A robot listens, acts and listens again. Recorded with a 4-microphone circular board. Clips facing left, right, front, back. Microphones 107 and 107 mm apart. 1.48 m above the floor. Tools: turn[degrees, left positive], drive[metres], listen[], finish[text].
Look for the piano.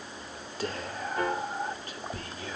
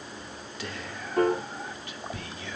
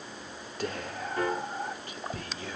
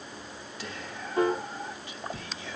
Thought: The piano: 115° right.
Action: turn[-115]
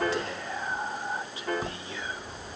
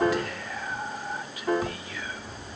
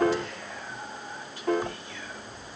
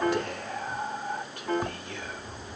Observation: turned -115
Action: finish[Facing the piano.]